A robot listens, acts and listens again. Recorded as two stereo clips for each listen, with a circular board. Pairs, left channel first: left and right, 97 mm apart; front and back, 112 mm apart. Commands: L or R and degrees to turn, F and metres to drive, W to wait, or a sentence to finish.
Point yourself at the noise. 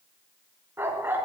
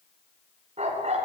R160
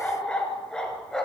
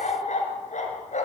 Facing the dog barking.